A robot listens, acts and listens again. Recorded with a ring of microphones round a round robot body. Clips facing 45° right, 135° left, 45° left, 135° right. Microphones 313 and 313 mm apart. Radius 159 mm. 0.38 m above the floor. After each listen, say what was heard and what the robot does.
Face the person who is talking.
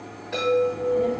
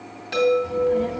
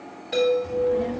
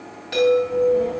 The child speaking: 90° left. Turn 90° left.
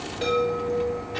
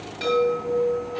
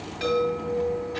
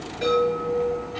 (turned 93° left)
Found it: a child speaking, straight ahead.